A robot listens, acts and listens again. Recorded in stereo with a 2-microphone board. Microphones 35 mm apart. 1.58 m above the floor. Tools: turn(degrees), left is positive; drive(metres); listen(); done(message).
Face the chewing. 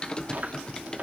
turn(degrees=-45)
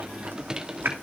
turn(degrees=-90)
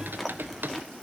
done("Found it: chewing, straight ahead, 2 to 4 m away.")